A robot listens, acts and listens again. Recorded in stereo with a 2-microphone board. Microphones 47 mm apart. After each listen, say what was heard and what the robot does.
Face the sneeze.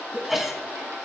Turn 30° right.
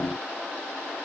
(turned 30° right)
Keep listening.
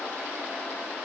I heard a sneeze, but can't make it out now. It was about 25° left or 145° right.